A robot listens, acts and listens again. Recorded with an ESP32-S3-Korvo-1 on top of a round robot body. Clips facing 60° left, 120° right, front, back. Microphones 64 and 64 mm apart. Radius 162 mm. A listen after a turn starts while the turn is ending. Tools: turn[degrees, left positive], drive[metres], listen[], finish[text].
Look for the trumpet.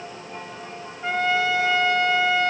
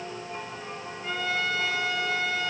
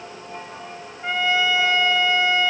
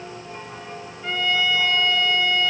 Thought: The trumpet: 70° left.
Action: turn[70]
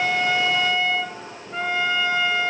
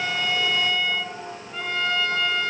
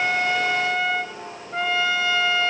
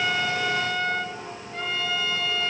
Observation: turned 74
Action: finish[Found it: a trumpet, straight ahead.]